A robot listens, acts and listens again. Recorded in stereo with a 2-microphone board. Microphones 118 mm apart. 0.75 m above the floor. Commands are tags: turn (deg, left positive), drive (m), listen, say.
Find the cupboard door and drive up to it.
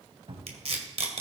<turn deg="-55"/>
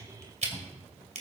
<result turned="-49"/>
<drive m="1.0"/>
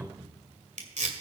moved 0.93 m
<turn deg="-10"/>
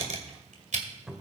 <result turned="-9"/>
<drive m="1.0"/>
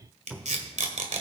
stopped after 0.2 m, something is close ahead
<say>Arrived at the cupboard door, straight ahead.</say>